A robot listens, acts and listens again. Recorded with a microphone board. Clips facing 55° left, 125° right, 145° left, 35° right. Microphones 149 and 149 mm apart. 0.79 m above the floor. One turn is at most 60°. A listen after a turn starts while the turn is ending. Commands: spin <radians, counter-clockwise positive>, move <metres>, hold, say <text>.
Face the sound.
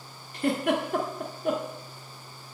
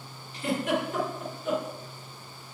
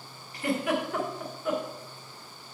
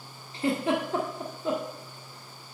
spin 0.44
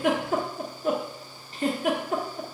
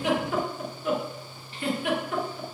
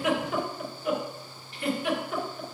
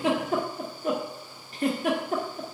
spin 0.17
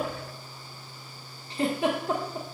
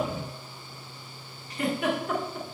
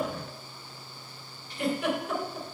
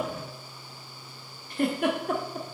say Facing the giggle, 1 to 2 m away.